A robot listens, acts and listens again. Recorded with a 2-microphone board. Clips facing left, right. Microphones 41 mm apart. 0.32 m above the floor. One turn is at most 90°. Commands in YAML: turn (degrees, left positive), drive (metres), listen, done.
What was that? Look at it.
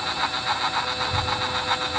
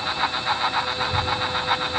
turn: -25
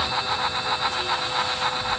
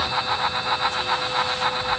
done: "Found it: a child speaking, straight ahead, over 4 m away."